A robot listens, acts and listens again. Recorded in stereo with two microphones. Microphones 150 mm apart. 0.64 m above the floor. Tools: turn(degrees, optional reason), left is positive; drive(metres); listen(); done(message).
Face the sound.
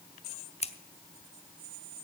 turn(degrees=40, reason="The scissors: about 40° left or 140° left.")
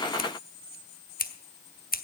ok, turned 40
turn(degrees=95, reason="So it is at 95° left.")
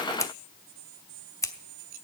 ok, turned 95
turn(degrees=20, reason="The scissors is now 20° left.")
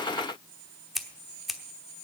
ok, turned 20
done("Found it: scissors, straight ahead.")